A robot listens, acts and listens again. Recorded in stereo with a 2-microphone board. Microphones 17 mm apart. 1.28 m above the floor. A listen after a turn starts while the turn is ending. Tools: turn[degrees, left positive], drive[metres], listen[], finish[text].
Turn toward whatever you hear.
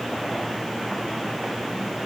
Action: listen[]
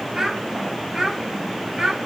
Thought: The child speaking: about 35° right or 145° right.
Action: turn[-35]
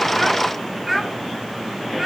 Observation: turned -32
Thought: So it is at 10° right.
Action: turn[-10]
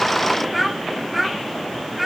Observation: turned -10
Action: finish[Facing the child speaking.]